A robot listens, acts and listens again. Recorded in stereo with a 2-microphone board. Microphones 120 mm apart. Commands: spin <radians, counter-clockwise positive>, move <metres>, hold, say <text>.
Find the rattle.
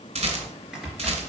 spin -1.13
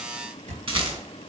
spin -0.87
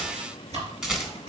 say Found it: a rattle, straight ahead.